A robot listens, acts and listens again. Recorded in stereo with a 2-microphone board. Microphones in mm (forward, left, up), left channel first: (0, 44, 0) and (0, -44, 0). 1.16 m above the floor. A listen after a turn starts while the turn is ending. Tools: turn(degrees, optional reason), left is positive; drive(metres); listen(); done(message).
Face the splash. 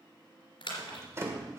turn(degrees=90)
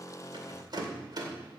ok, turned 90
done("Facing where the splash came from. I can't hear it now.")